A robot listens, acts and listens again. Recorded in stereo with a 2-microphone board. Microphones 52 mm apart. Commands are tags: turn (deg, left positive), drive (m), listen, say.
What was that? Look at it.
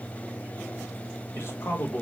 <turn deg="45"/>
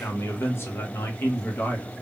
<turn deg="35"/>
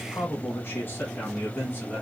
<turn deg="35"/>
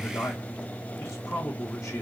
<turn deg="120"/>
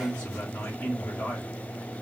<turn deg="20"/>
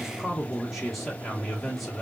<say>Found it: a man speaking, straight ahead, 1 to 2 m away.</say>